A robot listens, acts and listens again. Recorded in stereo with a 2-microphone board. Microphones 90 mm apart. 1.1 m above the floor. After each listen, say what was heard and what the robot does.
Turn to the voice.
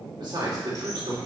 The man speaking: about 60° right or 120° right. Turn 60° right.
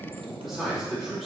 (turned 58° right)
Facing the man speaking, 2 to 4 m away.